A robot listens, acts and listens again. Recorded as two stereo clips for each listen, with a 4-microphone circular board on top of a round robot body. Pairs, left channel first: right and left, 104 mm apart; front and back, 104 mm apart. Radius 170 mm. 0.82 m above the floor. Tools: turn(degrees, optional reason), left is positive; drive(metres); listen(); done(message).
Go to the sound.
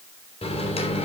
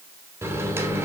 turn(degrees=-115, reason="The microwave: 115° right.")
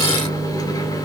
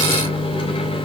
turn(degrees=-35, reason="The microwave is now 35° right.")
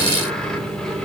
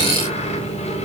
drive(metres=1.0)
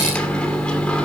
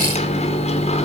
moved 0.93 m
turn(degrees=-10, reason="The microwave is now 10° right.")
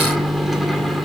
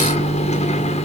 drive(metres=1.0)
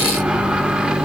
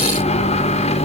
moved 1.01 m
drive(metres=1.0)
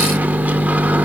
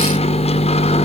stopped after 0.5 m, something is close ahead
turn(degrees=15, reason="The microwave is now 15° left.")
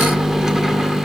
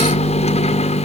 done("Arrived at the microwave, straight ahead.")